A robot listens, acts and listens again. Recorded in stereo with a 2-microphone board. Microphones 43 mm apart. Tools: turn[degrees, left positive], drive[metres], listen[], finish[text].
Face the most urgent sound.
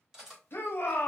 Thought: The shout: about 60° left or 120° left.
Action: turn[60]
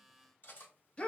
Thought: So it is at 30° left.
Action: turn[30]
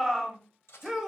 Thought: The shout is now 10° right.
Action: turn[-10]
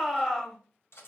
Action: finish[Facing the shout, under 1 m away.]